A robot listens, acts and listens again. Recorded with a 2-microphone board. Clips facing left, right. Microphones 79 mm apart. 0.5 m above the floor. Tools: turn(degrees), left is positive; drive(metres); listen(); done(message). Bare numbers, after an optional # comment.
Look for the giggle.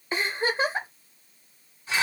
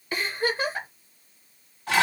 # The giggle: about 25° left or 155° left.
turn(25)
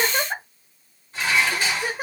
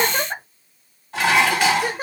done("Facing the giggle, under 1 m away.")